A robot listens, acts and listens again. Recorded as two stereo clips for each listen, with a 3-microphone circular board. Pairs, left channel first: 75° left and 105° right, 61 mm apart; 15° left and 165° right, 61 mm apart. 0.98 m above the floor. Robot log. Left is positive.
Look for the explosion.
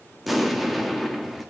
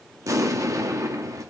note: The explosion: 165° left.
cmd yaw +165
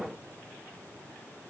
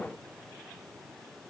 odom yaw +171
end: Facing where the explosion came from. I can't hear it now.